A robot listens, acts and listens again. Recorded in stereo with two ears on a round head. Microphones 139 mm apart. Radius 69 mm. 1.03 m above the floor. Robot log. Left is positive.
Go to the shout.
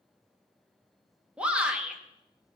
cmd yaw -30
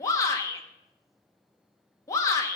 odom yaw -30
note: So it is at 25° left.
cmd yaw +25
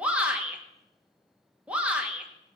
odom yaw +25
note: The shout is now 10° right.
cmd yaw -10
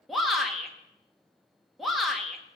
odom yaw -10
cmd fwd 1.0
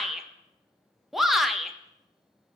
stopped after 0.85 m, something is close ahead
end: Arrived at the shout, straight ahead.